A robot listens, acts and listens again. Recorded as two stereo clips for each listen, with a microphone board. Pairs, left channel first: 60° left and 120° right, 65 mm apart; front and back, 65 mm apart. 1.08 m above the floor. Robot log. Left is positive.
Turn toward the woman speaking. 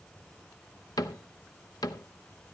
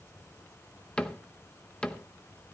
cmd idle
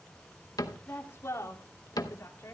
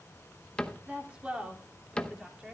note: The woman speaking: 100° left.
cmd yaw +100
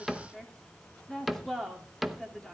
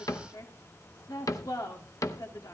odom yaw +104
note: The woman speaking is now 25° right.
cmd yaw -25
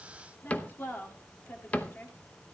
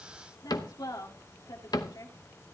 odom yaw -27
end: Facing the woman speaking.